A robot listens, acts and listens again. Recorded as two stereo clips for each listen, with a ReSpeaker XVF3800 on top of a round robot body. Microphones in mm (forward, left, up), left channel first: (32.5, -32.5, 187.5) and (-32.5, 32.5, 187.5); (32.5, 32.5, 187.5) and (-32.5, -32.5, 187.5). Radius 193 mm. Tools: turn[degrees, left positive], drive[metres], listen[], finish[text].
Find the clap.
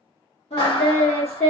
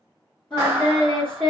Thought: The clap: 75° right.
Action: turn[-75]
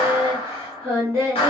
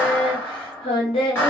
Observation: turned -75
Thought: The clap is now 20° right.
Action: turn[-20]
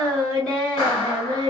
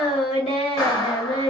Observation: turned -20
Action: finish[Facing the clap.]